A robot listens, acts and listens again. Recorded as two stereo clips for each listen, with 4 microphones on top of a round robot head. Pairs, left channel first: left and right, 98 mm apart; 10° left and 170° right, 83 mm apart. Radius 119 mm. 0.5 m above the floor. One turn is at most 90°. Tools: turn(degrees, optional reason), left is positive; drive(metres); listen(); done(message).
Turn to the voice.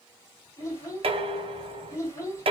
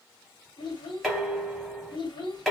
turn(degrees=30, reason="The child speaking: 30° left.")
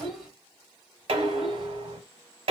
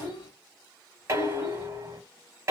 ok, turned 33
done("Found it: a child speaking, straight ahead, 1 to 2 m away.")